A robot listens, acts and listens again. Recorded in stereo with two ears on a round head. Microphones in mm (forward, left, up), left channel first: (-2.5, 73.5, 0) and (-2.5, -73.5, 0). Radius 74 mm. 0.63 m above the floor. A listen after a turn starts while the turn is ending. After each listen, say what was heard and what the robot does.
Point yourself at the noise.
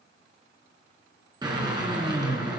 The drill: about 25° right or 155° right. Turn 25° right.
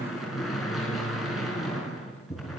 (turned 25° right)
Facing the drill, over 4 m away.